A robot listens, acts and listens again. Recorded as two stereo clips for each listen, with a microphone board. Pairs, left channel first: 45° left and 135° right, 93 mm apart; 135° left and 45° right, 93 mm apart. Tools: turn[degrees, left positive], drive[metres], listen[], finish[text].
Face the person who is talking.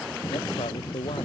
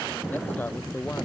Thought: The man speaking: 65° left.
Action: turn[65]
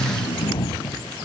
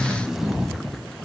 Action: listen[]
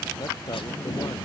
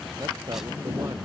Action: finish[Found it: a man speaking, straight ahead.]